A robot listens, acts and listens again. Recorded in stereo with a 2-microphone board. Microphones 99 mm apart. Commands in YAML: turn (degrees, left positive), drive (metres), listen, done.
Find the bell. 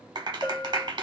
turn: 45
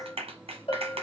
turn: 90
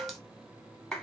done: "Found it: a bell, straight ahead, 1 to 2 m away."